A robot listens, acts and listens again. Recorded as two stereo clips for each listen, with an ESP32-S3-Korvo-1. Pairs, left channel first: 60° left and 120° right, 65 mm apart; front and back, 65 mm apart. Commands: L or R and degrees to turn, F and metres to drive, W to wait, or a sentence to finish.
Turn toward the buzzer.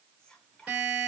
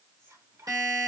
L170
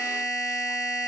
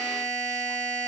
L55
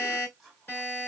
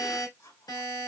Found it: a buzzer, straight ahead.